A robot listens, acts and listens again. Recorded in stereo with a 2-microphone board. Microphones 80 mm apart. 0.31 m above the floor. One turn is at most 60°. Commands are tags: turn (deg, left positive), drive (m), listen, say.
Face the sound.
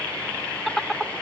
<turn deg="30"/>
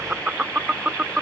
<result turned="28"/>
<turn deg="-15"/>
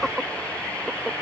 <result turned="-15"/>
<say>Facing the laughter.</say>